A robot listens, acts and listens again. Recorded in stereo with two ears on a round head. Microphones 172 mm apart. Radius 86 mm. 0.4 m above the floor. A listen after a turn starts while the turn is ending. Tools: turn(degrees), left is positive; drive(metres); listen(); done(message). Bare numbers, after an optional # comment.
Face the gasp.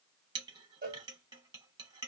listen()
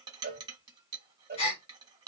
# The gasp: about 30° left or 150° left.
turn(30)
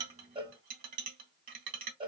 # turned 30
listen()
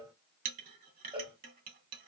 done("I heard a gasp, but can't make it out now. It was about straight ahead or 120° left.")